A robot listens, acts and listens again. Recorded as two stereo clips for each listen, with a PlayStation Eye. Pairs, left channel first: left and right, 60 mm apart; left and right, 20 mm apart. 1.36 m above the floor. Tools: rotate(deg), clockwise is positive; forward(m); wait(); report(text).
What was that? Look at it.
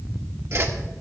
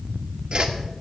rotate(50)
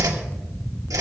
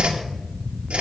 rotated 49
rotate(80)
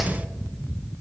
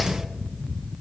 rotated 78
report("Facing the whoosh, 1 to 2 m away.")